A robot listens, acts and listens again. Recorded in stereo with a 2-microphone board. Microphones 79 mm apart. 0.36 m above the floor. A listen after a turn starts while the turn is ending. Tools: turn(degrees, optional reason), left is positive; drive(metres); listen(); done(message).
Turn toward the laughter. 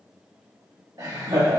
turn(degrees=-55, reason="The laughter: about 55° right or 125° right.")
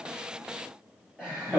turn(degrees=-15, reason="So it is at 15° right.")
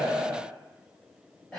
done("Found it: laughter, straight ahead.")